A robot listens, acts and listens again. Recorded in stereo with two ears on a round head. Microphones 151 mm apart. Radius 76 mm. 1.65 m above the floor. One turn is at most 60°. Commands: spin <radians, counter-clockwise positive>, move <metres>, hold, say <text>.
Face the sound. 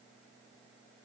hold
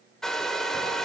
spin 0.52
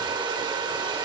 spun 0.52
spin -0.44
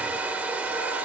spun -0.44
spin -0.17
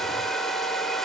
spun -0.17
say Facing the hair dryer.